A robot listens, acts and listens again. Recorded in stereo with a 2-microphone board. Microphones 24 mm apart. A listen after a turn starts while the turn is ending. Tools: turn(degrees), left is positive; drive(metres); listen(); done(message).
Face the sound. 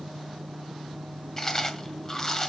turn(degrees=25)
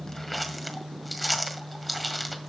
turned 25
done("Found it: chewing, straight ahead.")